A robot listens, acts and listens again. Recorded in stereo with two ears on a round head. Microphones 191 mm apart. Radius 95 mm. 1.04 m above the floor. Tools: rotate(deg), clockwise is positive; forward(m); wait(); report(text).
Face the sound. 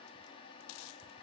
wait()
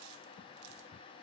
wait()
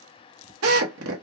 rotate(70)
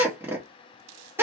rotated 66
rotate(10)
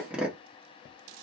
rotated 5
report("Facing the drill, 1 to 2 m away.")